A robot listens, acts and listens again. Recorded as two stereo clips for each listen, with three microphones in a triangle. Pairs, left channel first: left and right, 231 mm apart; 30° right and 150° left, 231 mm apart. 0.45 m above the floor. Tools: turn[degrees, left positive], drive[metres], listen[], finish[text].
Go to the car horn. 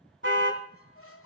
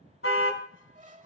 Thought: The car horn: 55° right.
Action: turn[-55]
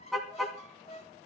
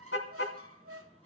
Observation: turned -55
Action: drive[1.0]
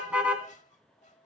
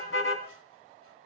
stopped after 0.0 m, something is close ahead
Action: finish[Something is in my way. I am facing the car horn but have not reached it.]